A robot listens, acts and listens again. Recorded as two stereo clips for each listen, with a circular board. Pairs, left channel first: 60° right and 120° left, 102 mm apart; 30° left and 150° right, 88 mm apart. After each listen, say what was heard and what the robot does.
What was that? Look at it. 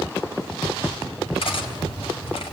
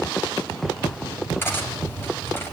The cutlery clinking: 35° right. Turn 35° right.
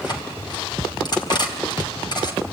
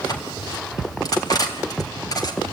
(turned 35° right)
The cutlery clinking is now 15° right. Turn 15° right.
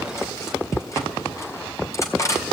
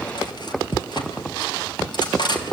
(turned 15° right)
Facing the cutlery clinking.